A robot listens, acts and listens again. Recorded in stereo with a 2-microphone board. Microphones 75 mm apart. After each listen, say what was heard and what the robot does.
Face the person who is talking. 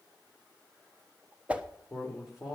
Turn 30° right.
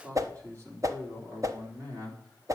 So it is at 125° right. Turn 125° right.
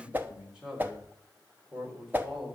Facing the man speaking, over 4 m away.